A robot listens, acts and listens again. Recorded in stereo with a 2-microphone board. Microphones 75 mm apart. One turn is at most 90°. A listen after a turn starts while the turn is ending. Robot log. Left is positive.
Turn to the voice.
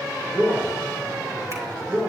note: The man speaking: about 25° right or 155° right.
cmd yaw -25
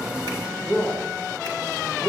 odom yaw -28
end: Facing the man speaking, 2 to 4 m away.